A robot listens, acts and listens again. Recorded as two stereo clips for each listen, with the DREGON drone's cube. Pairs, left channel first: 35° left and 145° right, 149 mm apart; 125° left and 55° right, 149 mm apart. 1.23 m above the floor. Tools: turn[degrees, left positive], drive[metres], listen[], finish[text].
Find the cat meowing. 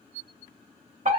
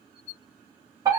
Action: listen[]
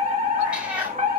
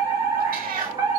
Thought: The cat meowing: 65° right.
Action: turn[-65]
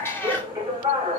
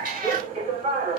Thought: The cat meowing is now 45° right.
Action: turn[-45]
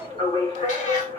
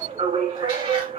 Action: listen[]
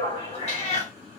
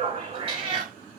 Thought: The cat meowing is now 10° right.
Action: turn[-10]
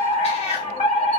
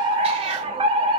Thought: The cat meowing is now 10° right.
Action: turn[-10]
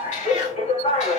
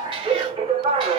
Action: finish[Found it: a cat meowing, straight ahead.]